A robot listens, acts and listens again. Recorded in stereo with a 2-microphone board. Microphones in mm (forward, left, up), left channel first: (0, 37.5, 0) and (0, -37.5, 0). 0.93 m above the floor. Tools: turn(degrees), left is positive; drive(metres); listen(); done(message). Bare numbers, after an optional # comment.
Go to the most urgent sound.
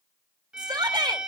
turn(-90)
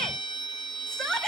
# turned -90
# So it is at 10° left.
turn(10)
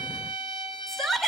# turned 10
drive(1.0)
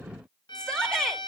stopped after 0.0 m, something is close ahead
# The shout is now 10° left.
turn(10)
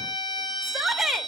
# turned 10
done("Something is in my way. I am facing the shout but have not reached it.")